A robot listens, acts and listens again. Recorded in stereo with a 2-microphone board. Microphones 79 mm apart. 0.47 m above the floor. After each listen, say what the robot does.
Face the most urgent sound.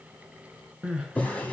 Turn 30° right.
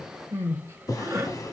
Turn 140° right.
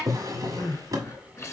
Turn 40° left.
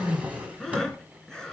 Facing the crying, under 1 m away.